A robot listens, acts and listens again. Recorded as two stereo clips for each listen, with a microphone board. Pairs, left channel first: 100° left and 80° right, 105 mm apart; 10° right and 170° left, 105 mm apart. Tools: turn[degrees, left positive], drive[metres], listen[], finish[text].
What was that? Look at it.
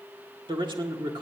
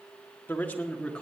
Thought: The man speaking: 90° right.
Action: turn[-90]
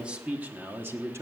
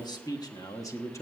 Thought: The man speaking is now 45° right.
Action: turn[-45]
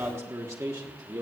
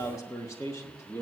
Thought: The man speaking is now 65° right.
Action: turn[-65]
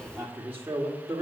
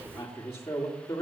Thought: The man speaking is now 20° right.
Action: turn[-20]
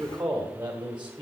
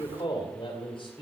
Thought: The man speaking is now 10° right.
Action: turn[-10]
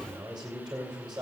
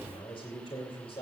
Action: finish[Found it: a man speaking, straight ahead.]